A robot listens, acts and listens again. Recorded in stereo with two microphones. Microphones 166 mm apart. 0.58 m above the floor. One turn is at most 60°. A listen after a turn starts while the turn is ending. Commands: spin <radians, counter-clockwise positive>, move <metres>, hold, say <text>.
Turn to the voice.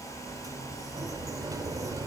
hold
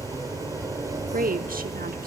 spin -1.05
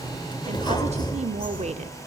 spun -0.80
spin -0.87
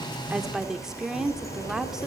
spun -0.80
say Facing the woman speaking, 1 to 2 m away.